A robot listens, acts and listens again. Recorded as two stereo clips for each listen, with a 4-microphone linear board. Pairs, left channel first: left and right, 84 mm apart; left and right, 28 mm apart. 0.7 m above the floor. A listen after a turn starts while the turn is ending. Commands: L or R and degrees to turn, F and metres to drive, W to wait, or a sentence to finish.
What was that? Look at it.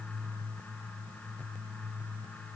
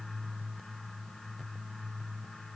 W
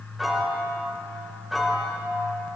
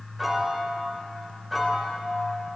L30
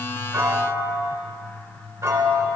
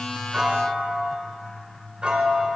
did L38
R40
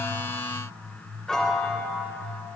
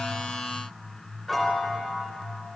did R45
Found it: a piano, straight ahead.